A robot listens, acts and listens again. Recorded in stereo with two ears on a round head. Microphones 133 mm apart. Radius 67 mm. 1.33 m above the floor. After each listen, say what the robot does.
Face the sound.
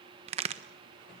Turn 40° right.
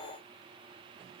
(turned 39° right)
Keep listening.
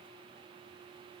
I heard a crack, but can't make it out now. It was about straight ahead or 105° right.